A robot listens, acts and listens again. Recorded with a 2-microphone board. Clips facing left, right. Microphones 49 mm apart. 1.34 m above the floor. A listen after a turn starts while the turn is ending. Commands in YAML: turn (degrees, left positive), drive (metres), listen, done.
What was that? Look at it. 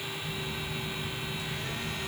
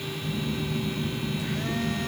turn: -55
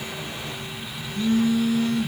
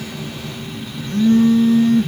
turn: -65
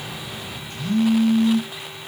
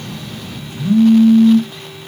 turn: -15
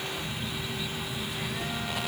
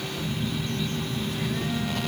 done: "Found it: a phone buzzing, straight ahead."